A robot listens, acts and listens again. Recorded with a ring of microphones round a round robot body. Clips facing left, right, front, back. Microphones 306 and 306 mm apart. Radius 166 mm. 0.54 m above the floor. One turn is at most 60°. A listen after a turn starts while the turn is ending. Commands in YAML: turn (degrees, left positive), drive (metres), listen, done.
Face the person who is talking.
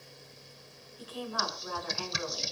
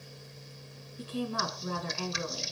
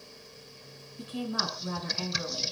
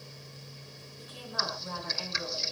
turn: -30
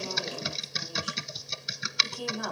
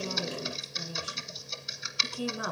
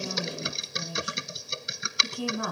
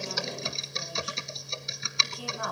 done: "Facing the woman speaking."